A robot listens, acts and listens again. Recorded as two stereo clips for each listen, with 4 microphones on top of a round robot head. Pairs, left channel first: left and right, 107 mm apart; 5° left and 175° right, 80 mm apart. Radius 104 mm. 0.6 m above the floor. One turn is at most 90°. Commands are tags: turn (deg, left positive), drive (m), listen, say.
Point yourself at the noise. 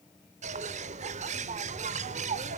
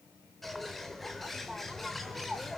<turn deg="-85"/>
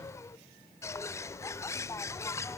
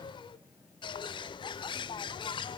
<turn deg="25"/>
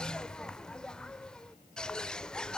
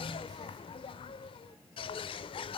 <say>Facing the bird, under 1 m away.</say>